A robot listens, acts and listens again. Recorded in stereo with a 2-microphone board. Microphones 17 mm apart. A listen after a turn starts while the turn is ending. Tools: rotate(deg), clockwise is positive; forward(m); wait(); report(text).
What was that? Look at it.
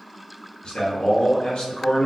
rotate(-70)
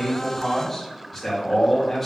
rotate(-20)
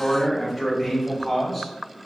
report("Found it: a man speaking, straight ahead, 1 to 2 m away.")